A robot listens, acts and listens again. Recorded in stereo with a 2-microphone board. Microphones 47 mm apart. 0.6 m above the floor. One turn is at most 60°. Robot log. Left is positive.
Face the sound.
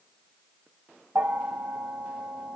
cmd yaw -60
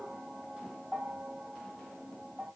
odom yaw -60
note: So it is at 25° right.
cmd yaw -25
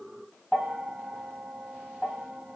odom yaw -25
note: The bell is now 10° right.
cmd yaw -10
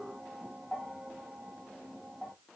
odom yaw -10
end: Found it: a bell, straight ahead, 1 to 2 m away.